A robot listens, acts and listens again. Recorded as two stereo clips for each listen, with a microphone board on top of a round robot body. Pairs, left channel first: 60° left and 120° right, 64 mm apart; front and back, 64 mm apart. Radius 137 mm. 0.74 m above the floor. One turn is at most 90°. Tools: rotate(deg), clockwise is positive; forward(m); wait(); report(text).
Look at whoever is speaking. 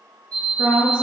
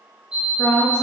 rotate(50)
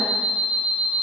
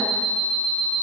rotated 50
wait()
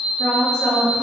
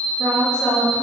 rotate(10)
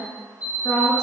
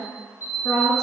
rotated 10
report("Found it: a woman speaking, straight ahead.")